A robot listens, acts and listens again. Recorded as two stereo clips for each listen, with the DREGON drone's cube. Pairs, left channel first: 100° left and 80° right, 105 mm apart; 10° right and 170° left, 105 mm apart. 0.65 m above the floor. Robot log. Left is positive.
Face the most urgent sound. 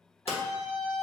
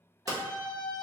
note: The scream: 35° left.
cmd yaw +35
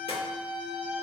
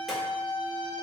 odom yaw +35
end: Found it: a scream, straight ahead.